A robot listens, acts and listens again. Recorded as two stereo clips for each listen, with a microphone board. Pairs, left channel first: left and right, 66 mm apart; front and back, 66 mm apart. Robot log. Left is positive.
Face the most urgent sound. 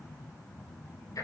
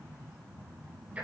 cmd idle
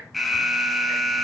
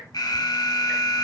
end: Facing the alarm, 1 to 2 m away.